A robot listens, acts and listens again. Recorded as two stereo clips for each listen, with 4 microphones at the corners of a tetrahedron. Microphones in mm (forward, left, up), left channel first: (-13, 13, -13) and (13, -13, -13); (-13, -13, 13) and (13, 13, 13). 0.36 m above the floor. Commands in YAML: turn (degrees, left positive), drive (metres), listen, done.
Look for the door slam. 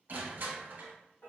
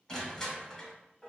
listen: true
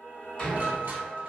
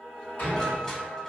turn: -165
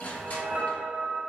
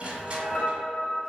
done: "Facing where the door slam came from. I can't hear it now."